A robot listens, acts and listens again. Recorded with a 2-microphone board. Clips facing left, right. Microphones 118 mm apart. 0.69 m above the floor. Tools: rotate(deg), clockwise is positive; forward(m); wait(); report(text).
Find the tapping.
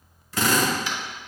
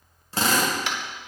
rotate(70)
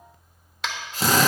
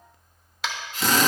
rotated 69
report("Found it: tapping, straight ahead.")